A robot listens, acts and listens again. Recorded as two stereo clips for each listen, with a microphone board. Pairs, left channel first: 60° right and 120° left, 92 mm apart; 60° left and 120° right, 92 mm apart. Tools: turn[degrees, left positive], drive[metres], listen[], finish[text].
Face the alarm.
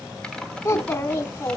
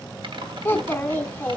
Action: listen[]
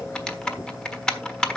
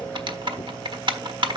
Action: listen[]
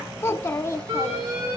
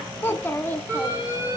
Thought: The alarm: 175° left.
Action: turn[175]
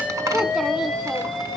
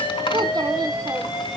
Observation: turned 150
Thought: The alarm is now 30° left.
Action: turn[30]
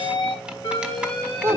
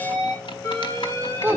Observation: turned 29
Action: finish[Found it: an alarm, straight ahead.]